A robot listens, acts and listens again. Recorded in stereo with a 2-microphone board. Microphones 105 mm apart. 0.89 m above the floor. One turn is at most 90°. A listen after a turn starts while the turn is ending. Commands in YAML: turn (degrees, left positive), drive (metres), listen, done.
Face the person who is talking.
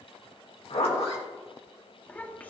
turn: 15
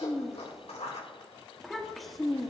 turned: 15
done: "Found it: a child speaking, straight ahead, 1 to 2 m away."